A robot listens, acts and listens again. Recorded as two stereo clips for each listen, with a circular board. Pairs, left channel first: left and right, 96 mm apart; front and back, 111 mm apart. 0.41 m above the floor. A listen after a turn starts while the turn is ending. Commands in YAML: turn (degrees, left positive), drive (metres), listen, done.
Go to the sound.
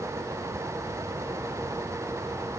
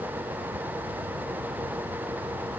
listen: true
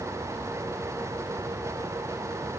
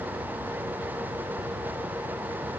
listen: true
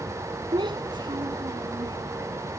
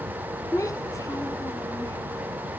turn: -60
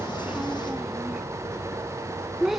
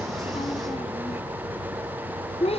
drive: 1.0
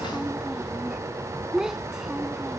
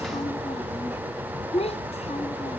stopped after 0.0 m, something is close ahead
done: "Blocked. The child speaking is further on, straight ahead."